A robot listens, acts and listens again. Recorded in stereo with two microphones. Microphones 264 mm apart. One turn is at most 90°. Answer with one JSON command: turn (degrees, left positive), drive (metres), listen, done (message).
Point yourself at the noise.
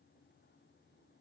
{"listen": true}
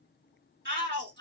{"turn": -40}
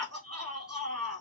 {"turn": -90}
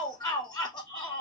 {"turn": 15}
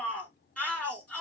{"done": "Found it: a shout, straight ahead."}